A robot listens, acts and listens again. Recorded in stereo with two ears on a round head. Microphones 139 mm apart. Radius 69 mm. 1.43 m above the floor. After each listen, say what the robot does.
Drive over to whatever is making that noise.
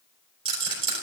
Turn 40° right.
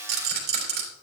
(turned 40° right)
Turn 100° right.
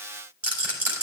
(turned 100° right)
Turn 10° right.
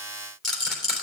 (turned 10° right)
Drive 1.0 m forward.
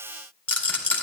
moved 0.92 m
Turn 10° left.
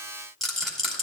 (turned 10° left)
Drive 1.0 m forward.
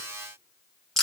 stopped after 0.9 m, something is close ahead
I am next to the rattle.